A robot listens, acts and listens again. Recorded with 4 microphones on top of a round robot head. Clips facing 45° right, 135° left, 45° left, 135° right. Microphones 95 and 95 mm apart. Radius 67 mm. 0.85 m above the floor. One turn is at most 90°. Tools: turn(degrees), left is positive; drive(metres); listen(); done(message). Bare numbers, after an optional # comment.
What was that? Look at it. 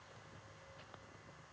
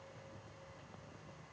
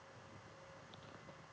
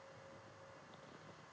listen()
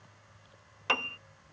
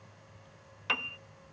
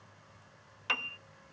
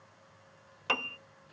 # The piano: 90° right.
turn(-90)
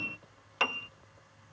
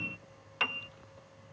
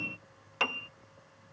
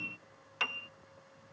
done("Found it: a piano, straight ahead.")